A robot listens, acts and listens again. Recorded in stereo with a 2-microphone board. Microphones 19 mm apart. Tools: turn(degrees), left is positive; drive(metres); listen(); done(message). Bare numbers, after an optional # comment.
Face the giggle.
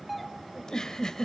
# The giggle: about 40° left or 140° left.
turn(40)
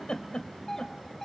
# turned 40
# So it is at 95° left.
turn(95)
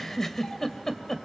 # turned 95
# The giggle is now 20° left.
turn(20)
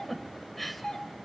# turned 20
# The giggle is now 10° left.
turn(10)
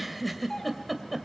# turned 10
done("Found it: a giggle, straight ahead, 2 to 4 m away.")